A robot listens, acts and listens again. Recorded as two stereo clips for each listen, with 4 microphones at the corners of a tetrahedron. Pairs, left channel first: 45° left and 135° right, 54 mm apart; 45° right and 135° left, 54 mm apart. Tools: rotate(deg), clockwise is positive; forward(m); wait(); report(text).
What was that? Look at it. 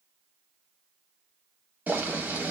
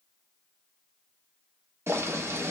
rotate(-170)
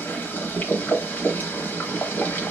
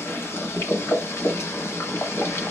rotate(10)
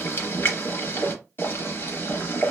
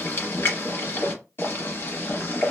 report("Found it: boiling, straight ahead, under 1 m away.")